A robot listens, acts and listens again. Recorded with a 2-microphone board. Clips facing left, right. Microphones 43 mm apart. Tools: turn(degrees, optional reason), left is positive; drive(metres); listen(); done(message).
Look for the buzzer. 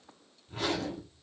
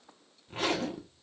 listen()
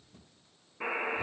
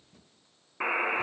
turn(degrees=-50, reason="The buzzer: about 50° right or 130° right.")
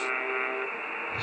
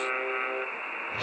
done("Found it: a buzzer, straight ahead.")